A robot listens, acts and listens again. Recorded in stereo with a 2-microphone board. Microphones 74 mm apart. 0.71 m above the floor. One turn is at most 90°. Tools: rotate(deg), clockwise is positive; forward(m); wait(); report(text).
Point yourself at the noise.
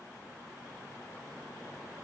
wait()
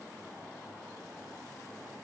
wait()
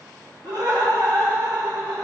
rotate(65)
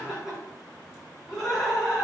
report("Found it: laughter, straight ahead.")